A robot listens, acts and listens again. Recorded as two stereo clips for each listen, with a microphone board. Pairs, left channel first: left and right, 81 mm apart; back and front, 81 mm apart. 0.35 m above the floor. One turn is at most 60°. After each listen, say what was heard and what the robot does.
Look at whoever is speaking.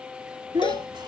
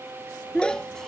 The child speaking: 100° right. Turn 60° right.
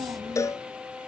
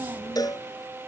The child speaking is now 55° right. Turn 55° right.
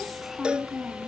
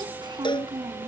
Found it: a child speaking, straight ahead.